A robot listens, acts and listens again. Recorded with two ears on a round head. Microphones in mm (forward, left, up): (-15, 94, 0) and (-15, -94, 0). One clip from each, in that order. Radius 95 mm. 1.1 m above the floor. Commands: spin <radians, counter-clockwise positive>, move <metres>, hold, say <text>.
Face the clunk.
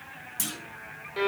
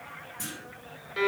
spin 1.22
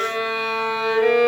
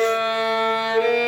hold
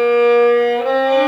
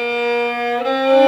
say I heard a clunk, but can't make it out now. It was about straight ahead or 40° left.